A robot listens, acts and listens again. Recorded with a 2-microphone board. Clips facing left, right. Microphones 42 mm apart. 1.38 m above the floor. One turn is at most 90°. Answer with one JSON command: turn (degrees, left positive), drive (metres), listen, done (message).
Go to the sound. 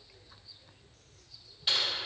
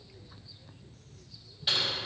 {"turn": 30}
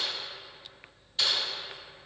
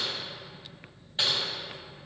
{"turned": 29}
{"turn": -30}
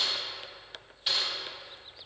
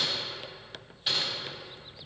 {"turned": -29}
{"drive": 1.0}
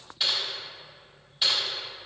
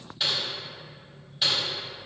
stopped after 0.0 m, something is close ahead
{"done": "Something is in my way. I am facing the typing on a keyboard but have not reached it."}